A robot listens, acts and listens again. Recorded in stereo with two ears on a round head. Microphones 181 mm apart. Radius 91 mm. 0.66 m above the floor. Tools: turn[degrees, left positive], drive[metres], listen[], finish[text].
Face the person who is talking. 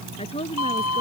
Thought: The woman speaking: about 30° left or 150° left.
Action: turn[30]
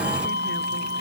Action: listen[]
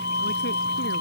Action: listen[]
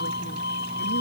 Action: finish[I heard a woman speaking, but can't make it out now. It was about straight ahead or 120° left.]